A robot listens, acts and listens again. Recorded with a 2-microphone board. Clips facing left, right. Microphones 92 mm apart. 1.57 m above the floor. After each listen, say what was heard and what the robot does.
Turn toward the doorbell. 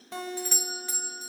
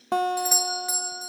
Turn 30° right.
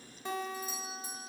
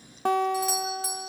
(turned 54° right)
So it is at 115° right. Turn 115° right.
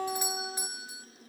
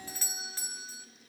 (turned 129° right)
The doorbell is now 15° left. Turn 15° left.
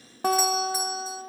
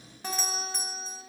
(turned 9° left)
Keep listening.
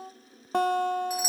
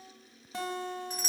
Facing the doorbell, 1 to 2 m away.